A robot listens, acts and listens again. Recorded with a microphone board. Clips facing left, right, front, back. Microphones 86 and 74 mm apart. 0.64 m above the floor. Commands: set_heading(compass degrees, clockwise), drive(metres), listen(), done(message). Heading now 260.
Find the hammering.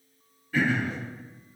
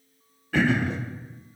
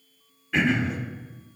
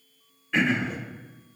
listen()
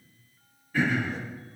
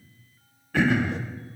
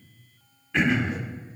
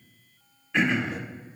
listen()
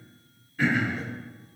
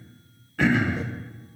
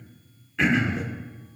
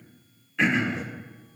done("I can't make out hammering, only throat clearing.")